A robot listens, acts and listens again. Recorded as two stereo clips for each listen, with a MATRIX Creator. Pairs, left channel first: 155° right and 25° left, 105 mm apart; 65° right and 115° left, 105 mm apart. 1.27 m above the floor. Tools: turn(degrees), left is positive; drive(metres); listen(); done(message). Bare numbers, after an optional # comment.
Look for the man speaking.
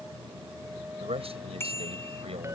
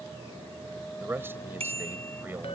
# The man speaking: 45° left.
turn(45)
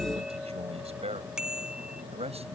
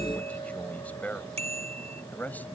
# The man speaking is now 10° left.
turn(10)
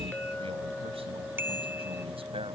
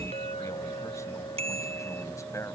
listen()
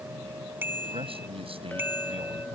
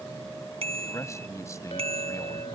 done("Facing the man speaking.")